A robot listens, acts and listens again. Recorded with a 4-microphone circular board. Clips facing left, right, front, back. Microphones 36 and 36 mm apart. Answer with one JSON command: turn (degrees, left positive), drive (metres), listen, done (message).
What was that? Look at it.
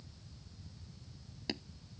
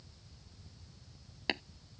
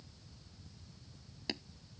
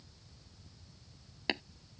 {"turn": -130}
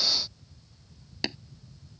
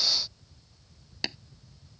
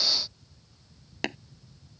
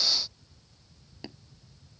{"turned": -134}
{"done": "Found it: tapping, straight ahead."}